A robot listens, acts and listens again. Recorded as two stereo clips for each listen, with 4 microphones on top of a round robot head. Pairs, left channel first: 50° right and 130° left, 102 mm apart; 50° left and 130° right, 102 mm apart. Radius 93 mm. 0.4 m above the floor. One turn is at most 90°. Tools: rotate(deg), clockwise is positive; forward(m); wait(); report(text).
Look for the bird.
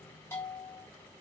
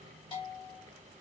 wait()
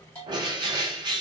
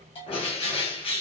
rotate(-85)
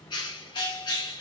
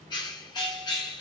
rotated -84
report("Found it: a bird, straight ahead.")